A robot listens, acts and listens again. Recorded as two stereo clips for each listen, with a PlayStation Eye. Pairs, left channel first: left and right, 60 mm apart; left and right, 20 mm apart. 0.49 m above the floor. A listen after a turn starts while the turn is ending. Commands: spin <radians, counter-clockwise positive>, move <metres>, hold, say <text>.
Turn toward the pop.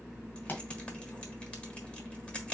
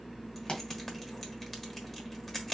spin 0.70
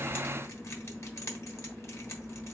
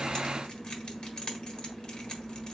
hold
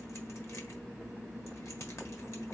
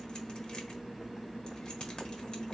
say I heard a pop, but can't make it out now. It was about straight ahead or 100° left.